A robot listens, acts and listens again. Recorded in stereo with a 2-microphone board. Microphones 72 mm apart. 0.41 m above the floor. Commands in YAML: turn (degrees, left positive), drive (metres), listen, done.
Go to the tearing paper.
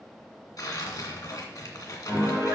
turn: 65
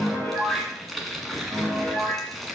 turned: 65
drive: 1.0
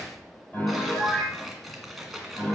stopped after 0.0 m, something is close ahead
done: "Something is in my way. I am facing the tearing paper but have not reached it."